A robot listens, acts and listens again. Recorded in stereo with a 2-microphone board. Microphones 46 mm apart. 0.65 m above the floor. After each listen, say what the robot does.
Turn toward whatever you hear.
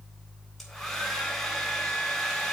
Turn 30° left.
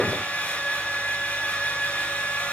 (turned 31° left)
Turn 145° left.
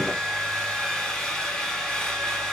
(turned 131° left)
Turn 15° left.
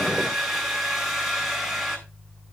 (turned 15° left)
Facing the hair dryer, 2 to 4 m away.